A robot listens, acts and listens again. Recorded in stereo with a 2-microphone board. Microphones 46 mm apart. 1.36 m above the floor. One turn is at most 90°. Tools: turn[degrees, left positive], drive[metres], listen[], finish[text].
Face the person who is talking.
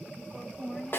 Action: turn[30]
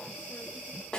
Action: listen[]
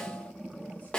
Action: listen[]
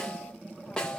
Action: finish[I heard a woman speaking, but can't make it out now. It was about 30° right or 150° left.]